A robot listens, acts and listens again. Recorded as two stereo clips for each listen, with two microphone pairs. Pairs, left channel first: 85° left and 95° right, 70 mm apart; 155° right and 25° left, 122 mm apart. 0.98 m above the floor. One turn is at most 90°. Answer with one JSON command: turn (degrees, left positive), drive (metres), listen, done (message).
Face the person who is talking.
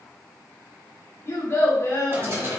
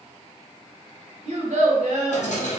{"turn": 45}
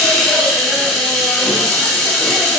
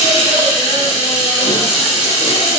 {"listen": true}
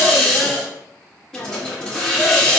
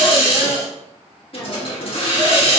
{"listen": true}
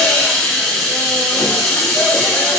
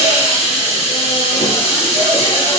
{"done": "Facing where the child speaking came from. I can't hear it now."}